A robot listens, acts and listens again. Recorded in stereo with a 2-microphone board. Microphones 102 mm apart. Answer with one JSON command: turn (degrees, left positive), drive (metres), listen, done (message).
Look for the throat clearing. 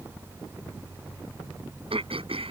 {"turn": -65}
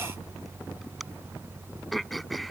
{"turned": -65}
{"done": "Found it: throat clearing, straight ahead."}